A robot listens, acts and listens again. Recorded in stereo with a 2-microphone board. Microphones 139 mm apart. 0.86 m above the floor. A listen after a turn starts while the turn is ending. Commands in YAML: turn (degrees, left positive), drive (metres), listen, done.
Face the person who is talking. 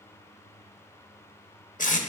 listen: true
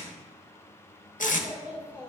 turn: -30
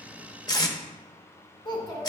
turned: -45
turn: 35
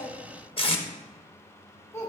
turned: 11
turn: 20
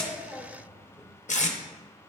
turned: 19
done: "Found it: a child speaking, straight ahead, 2 to 4 m away."